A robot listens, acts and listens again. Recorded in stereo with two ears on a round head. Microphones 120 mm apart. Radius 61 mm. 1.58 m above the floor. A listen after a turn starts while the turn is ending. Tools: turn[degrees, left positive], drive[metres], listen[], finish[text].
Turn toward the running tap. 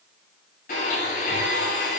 Action: listen[]
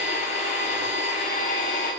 Action: listen[]
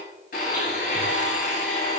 Action: finish[I can't make out a running tap, only a blender.]